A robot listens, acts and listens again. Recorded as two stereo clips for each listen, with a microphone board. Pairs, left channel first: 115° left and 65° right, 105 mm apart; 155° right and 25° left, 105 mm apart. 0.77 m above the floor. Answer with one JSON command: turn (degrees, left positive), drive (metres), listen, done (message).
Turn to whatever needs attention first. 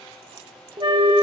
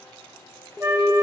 {"turn": -75}
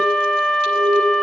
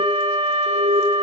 {"turn": -15}
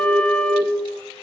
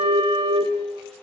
{"done": "Facing the alarm."}